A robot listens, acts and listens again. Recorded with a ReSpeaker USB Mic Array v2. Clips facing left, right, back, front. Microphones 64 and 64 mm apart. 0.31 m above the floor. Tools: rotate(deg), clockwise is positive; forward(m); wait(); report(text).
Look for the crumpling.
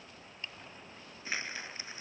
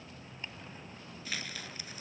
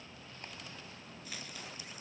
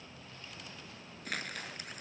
rotate(-25)
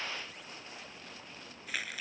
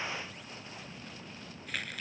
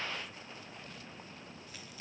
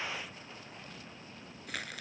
report("Found it: crumpling, straight ahead.")